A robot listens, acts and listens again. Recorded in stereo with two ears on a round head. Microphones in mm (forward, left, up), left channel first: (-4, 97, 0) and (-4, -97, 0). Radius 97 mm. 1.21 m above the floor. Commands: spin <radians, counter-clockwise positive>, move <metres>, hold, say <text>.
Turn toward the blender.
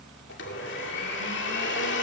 spin 0.96
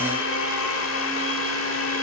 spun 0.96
spin 1.22
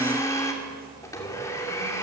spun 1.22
spin 0.26
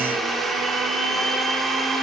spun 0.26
say Found it: a blender, straight ahead, 2 to 4 m away.